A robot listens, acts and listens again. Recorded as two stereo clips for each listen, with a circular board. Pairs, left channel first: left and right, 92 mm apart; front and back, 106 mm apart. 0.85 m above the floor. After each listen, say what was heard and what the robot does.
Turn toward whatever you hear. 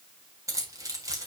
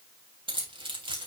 The keys jangling: 145° right. Turn 145° right.
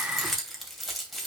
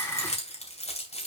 Found it: keys jangling, straight ahead.